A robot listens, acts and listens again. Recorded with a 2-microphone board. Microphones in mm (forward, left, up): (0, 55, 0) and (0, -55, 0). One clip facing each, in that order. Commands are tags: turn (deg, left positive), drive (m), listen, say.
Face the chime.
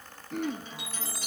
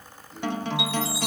<turn deg="45"/>
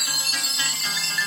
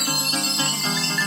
<say>Found it: a chime, straight ahead, 1 to 2 m away.</say>